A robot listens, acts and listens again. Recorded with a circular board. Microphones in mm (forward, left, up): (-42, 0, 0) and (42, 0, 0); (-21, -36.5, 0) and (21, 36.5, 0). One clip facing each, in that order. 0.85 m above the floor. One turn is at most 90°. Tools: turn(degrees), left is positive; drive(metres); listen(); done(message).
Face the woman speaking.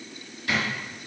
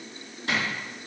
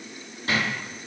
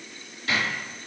listen()
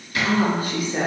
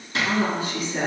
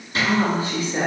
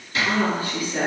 turn(degrees=-90)
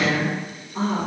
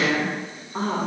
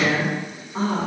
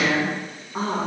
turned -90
done("Facing the woman speaking, 1 to 2 m away.")